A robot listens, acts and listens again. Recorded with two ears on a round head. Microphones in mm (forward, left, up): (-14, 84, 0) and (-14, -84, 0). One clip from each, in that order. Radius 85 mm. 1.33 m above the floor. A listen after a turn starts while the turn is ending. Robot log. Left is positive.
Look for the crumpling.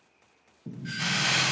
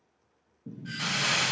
cmd yaw +30
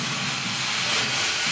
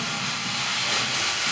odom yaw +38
note: So it is at 35° right.
cmd yaw -35
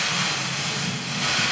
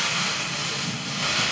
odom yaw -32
end: Facing the crumpling.